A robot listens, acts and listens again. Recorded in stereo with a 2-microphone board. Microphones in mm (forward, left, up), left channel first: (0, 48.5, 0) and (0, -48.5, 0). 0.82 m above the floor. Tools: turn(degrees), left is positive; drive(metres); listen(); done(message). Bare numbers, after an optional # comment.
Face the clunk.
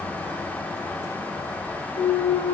turn(90)
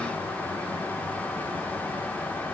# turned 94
done("Facing where the clunk came from. I can't hear it now.")